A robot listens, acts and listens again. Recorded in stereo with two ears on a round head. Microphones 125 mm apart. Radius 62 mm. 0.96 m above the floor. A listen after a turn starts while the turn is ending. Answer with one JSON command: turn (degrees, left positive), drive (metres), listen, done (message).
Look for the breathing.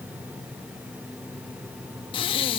{"turn": 40}
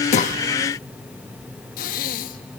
{"turn": 100}
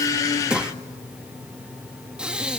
{"turn": -10}
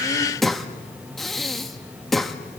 {"done": "Found it: breathing, straight ahead, 1 to 2 m away."}